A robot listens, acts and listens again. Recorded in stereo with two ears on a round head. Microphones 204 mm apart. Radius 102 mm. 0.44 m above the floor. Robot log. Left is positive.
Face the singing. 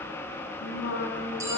note: The singing: about 55° left or 125° left.
cmd yaw +55
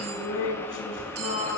note: So it is at 55° left.
cmd yaw +55
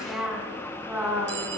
note: The singing is now 10° right.
cmd yaw -10
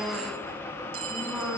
end: Facing the singing.